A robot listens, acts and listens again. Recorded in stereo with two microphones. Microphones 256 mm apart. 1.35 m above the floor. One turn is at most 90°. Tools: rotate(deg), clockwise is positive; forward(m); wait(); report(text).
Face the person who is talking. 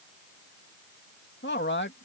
rotate(-45)
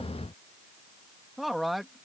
report("Found it: a man speaking, straight ahead.")